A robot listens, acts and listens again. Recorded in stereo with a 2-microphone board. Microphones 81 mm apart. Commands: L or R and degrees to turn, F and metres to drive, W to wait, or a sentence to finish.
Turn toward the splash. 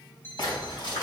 L65
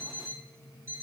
W
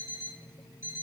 I heard a splash, but can't make it out now. It was about straight ahead or 50° left.